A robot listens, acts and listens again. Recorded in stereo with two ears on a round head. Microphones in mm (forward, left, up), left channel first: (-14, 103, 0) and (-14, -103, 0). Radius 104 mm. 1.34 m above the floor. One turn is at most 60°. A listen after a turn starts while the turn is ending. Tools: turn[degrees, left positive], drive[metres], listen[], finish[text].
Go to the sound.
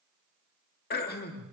Thought: The throat clearing: about 45° left or 135° left.
Action: turn[45]
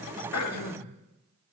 Thought: So it is at 90° left.
Action: turn[60]
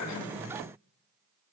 Thought: Nothing new. It was at 30° left.
Action: turn[30]
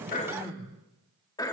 Thought: The throat clearing is now 15° left.
Action: turn[15]
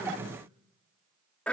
Action: drive[1.0]
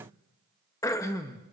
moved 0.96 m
Thought: The throat clearing is now 15° left.
Action: turn[15]
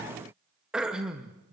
Action: drive[1.0]
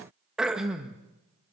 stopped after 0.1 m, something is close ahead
Action: finish[I am next to the throat clearing.]